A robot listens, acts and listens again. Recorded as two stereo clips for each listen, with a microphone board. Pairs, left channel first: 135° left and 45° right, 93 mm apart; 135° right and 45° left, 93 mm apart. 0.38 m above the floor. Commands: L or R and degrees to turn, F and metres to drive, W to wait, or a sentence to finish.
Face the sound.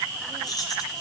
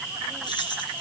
R175
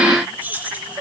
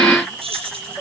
L30
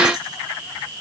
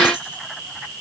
W
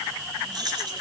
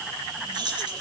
Facing the keys jangling.